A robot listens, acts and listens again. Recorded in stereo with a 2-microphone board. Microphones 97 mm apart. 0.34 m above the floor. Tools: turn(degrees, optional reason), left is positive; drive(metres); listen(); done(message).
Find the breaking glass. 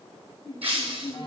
turn(degrees=-65, reason="The breaking glass: about 65° right or 115° right.")
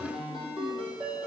listen()
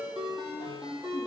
done("I heard breaking glass, but can't make it out now. It was about straight ahead or 50° right.")